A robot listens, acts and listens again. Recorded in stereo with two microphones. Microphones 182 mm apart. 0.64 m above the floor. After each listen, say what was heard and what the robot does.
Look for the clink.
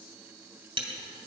The clink: about 30° right or 150° right. Turn 30° right.
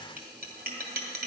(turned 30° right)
So it is at 120° right. Turn 120° right.
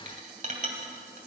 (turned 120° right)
The clink is now 45° right. Turn 45° right.
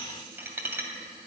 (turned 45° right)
The clink is now 10° right. Turn 10° right.
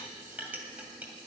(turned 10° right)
The clink is now 10° right. Turn 10° right.
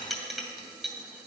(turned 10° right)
Found it: a clink, straight ahead, 2 to 4 m away.